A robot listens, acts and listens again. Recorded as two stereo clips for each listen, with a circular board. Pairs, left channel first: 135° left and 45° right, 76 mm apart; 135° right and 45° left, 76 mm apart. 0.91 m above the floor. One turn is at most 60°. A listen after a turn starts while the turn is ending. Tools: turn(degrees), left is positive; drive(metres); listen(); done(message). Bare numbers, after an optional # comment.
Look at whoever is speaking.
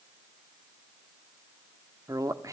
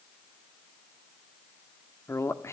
# The man speaking: 85° right.
turn(-60)
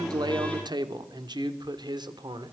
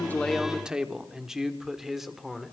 # The man speaking is now 40° right.
turn(-40)
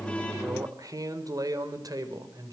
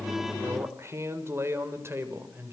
# The man speaking is now 10° right.
turn(-10)
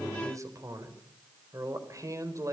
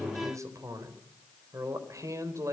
done("Facing the man speaking, over 4 m away.")